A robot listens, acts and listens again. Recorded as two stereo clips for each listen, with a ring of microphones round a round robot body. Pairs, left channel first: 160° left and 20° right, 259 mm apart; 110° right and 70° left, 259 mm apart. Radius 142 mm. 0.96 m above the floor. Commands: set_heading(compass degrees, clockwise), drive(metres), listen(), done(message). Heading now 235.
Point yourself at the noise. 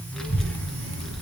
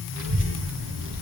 set_heading(165)
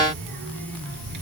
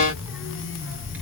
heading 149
set_heading(164)
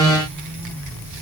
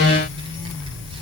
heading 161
done("Found it: a child speaking, straight ahead, over 4 m away.")